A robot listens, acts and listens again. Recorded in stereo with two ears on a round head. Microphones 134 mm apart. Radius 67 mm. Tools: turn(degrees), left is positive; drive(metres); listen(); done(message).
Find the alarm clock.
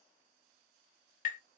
listen()
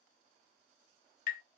listen()
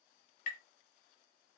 done("I can't make out an alarm clock to turn to.")